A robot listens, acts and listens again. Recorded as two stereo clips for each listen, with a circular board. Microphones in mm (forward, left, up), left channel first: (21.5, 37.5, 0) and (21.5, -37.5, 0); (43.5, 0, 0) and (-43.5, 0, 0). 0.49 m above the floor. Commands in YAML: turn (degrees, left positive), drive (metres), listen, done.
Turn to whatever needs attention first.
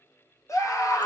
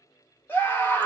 turn: 65
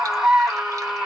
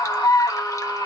turn: -10
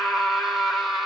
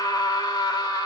done: "Found it: a scream, straight ahead, 1 to 2 m away."